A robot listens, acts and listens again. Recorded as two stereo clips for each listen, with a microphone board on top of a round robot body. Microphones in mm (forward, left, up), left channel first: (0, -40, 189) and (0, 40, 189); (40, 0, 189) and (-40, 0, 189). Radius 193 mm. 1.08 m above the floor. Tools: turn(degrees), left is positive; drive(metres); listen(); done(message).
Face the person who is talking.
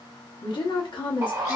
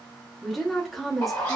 turn(degrees=-90)
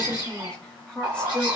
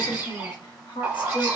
turn(degrees=-10)
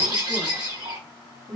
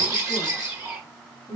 done("Found it: a woman speaking, straight ahead.")